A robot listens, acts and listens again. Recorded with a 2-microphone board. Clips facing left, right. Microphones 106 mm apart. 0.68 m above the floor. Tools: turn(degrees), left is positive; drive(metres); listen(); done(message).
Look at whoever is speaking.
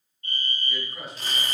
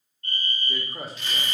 turn(degrees=-40)
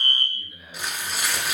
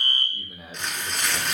turn(degrees=-100)
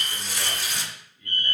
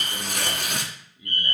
turn(degrees=-10)
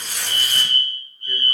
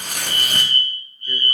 listen()
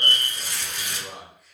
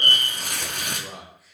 done("Facing the man speaking.")